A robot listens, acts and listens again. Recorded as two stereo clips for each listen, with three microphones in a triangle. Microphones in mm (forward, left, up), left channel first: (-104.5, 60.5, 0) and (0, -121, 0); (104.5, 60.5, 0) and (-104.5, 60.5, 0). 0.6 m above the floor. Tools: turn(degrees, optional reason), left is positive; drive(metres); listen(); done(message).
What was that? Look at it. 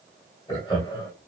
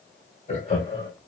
turn(degrees=55, reason="The laughter: 55° left.")
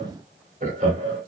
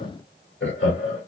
done("Found it: laughter, straight ahead.")